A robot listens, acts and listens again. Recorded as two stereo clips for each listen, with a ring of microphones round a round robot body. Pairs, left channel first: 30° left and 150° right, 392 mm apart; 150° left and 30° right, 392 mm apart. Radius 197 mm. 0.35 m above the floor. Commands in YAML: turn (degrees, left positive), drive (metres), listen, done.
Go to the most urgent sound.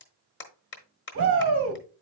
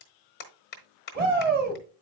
turn: -95
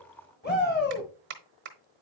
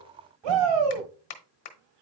turn: -35
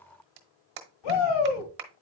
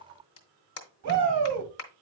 turn: 15
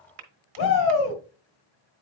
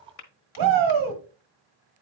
drive: 1.0
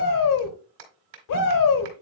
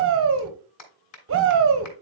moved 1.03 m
turn: 15
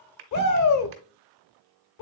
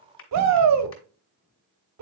drive: 1.0
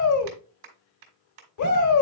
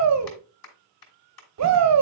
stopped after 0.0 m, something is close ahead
done: "Arrived at the shout, straight ahead."